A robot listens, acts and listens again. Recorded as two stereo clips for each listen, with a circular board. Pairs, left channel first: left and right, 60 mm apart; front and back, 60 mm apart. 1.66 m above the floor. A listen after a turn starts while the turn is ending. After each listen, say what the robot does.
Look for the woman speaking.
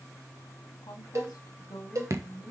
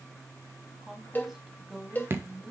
Turn 100° left.
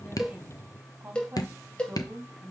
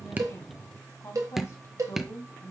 Turn 35° right.
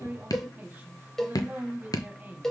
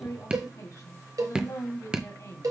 Turn 25° right.
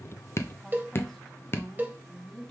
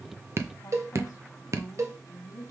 Turn 10° left.
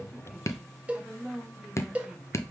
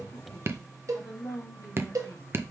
Facing the woman speaking.